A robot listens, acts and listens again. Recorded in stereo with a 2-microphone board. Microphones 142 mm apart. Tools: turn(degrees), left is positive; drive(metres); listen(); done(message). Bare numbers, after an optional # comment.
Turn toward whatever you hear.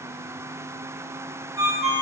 # The ringtone: about 20° right or 160° right.
turn(-20)
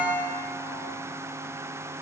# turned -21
# So it is at 140° right.
turn(-140)
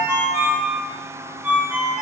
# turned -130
# The ringtone is now 10° right.
turn(-10)
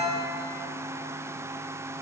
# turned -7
done("Found it: a ringtone, straight ahead, 1 to 2 m away.")